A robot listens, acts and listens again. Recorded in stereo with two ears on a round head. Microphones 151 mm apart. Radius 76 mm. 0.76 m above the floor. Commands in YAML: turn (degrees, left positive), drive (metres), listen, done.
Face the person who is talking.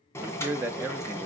turn: -30
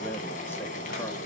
listen: true
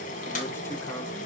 listen: true
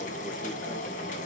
done: "I heard a man speaking, but can't make it out now. It was about 20° left or 140° right."